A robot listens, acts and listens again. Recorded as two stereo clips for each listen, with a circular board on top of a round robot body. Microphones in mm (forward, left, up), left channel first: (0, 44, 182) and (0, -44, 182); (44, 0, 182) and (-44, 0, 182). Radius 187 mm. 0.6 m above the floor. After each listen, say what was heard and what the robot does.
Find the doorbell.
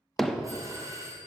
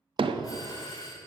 The doorbell: 40° right. Turn 40° right.
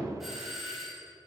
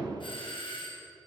Facing the doorbell, 2 to 4 m away.